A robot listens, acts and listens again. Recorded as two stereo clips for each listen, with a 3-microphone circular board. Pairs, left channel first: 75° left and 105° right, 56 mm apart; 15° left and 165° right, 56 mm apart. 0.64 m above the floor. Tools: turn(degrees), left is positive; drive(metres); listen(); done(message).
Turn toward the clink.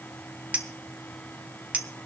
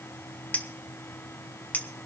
turn(degrees=-40)
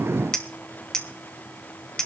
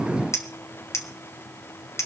done("Found it: a clink, straight ahead.")